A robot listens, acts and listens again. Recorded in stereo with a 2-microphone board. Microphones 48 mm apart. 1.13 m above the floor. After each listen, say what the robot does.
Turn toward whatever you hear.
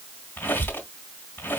Turn 60° left.
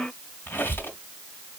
Turn 60° left.
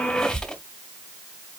Turn 15° left.
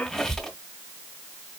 Found it: a squeak, straight ahead.